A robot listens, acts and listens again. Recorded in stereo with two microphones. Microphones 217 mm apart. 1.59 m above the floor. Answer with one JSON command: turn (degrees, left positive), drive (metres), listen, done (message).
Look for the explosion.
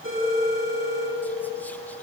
{"listen": true}
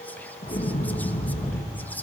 {"turn": 40}
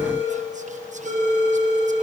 {"listen": true}
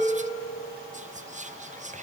{"done": "I heard an explosion, but can't make it out now. It was about straight ahead or 100° left."}